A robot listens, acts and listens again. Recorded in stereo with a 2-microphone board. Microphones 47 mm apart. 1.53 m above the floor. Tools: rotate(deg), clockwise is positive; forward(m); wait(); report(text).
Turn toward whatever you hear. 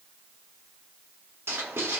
rotate(70)
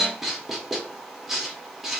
report("Found it: writing, straight ahead, under 1 m away.")